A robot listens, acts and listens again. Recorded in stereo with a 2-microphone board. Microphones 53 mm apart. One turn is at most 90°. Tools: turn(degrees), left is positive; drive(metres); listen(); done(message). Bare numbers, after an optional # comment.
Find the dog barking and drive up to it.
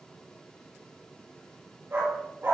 # The dog barking: about 50° right or 130° right.
turn(-50)
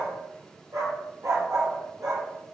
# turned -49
# So it is at 80° right.
turn(-80)
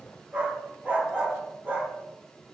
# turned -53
# The dog barking is now 25° right.
turn(-25)
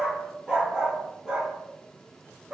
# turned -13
# The dog barking is now 15° right.
turn(-15)
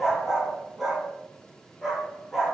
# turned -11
drive(1.0)
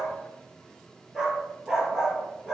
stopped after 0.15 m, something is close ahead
# The dog barking is now 10° right.
turn(-10)
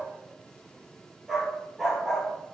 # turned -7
done("Blocked. The dog barking is further on, straight ahead.")